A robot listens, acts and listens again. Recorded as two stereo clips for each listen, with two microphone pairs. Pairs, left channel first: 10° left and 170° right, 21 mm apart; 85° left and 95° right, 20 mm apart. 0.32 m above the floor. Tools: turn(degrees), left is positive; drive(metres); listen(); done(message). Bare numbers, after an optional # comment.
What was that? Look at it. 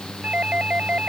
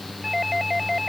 # The doorbell: 175° right.
turn(-175)
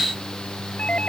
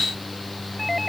listen()
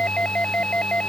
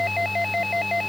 done("Found it: a doorbell, straight ahead.")